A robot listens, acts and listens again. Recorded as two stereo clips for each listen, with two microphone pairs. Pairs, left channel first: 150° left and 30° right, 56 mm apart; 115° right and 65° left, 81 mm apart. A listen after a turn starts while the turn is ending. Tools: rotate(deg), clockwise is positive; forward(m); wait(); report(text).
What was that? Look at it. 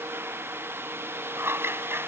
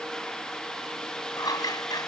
rotate(75)
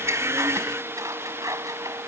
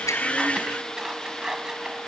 rotate(20)
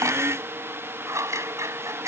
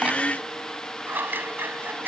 report("Found it: scissors, straight ahead.")